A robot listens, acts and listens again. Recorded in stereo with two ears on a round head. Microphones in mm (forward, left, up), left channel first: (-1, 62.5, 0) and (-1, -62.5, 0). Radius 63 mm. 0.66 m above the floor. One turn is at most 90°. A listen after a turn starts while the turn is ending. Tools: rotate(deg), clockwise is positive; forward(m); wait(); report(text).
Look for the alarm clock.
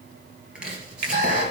rotate(60)
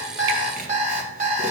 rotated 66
rotate(55)
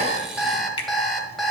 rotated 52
report("Found it: an alarm clock, straight ahead, 1 to 2 m away.")